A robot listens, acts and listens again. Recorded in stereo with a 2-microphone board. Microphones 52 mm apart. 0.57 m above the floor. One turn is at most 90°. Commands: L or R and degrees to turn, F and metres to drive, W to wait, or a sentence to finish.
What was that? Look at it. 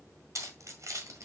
R90
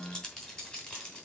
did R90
L20
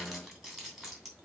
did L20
Facing the keys jangling, 2 to 4 m away.